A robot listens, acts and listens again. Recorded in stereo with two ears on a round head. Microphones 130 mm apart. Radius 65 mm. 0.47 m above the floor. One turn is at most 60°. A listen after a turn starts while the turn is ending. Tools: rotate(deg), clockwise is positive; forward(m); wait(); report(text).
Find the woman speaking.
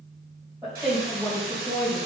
rotate(30)
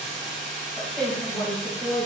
rotate(-20)
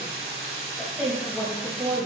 report("Facing the woman speaking.")